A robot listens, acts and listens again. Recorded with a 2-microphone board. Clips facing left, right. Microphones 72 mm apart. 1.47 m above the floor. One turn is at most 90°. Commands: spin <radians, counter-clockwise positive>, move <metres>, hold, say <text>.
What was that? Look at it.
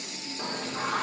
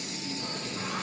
spin 1.57
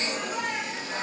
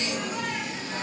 spin 0.26
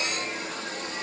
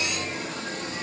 say Found it: singing, straight ahead.